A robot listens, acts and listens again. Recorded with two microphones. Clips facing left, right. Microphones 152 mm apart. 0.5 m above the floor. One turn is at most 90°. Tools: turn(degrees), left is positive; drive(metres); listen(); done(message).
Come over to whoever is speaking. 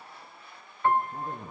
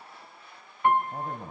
turn(degrees=-70)
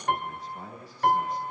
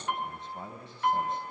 turn(degrees=-25)
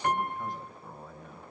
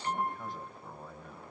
drive(metres=1.0)
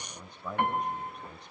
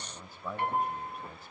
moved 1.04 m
drive(metres=1.0)
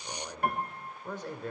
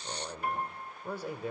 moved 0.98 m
turn(degrees=-10)
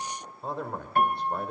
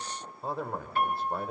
drive(metres=1.0)
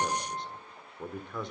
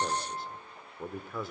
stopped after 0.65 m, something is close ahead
done("I am next to the man speaking.")